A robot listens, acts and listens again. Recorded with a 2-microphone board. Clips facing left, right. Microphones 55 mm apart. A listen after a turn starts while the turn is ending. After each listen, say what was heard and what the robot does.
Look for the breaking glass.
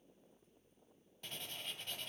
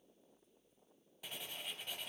Keep listening.
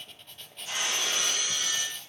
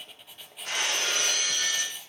The breaking glass: about 60° right or 120° right. Turn 60° right.
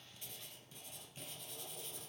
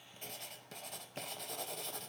Keep listening.
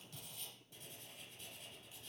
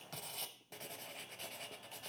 I heard breaking glass, but can't make it out now. It was about straight ahead or 60° right.